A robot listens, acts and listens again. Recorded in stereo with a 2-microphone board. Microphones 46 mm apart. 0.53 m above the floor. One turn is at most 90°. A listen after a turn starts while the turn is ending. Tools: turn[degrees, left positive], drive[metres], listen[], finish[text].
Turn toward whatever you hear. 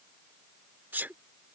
Thought: The sneeze: about 45° right or 135° right.
Action: turn[-45]
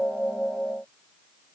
Action: listen[]
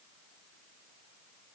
Action: finish[I heard a sneeze, but can't make it out now. It was about straight ahead or 90° right.]